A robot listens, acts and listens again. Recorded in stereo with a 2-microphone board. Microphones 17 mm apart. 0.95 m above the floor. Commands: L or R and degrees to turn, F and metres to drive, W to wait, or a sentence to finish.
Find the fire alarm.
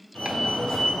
L65
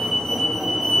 L20
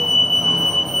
Found it: a fire alarm, straight ahead, 2 to 4 m away.